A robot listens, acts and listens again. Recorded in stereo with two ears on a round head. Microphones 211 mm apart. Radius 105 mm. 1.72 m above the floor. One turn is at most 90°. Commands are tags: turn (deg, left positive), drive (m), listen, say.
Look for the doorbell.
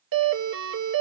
<turn deg="-55"/>
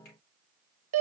<turn deg="-65"/>
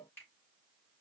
<listen/>
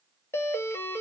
<turn deg="10"/>
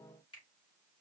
<listen/>
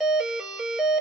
<say>Found it: a doorbell, straight ahead, under 1 m away.</say>